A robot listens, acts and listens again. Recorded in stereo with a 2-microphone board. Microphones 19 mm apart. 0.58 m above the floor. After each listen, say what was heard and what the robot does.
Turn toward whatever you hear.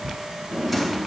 Turn 30° right.
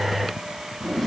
So it is at 15° left. Turn 15° left.
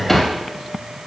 Facing the drawer.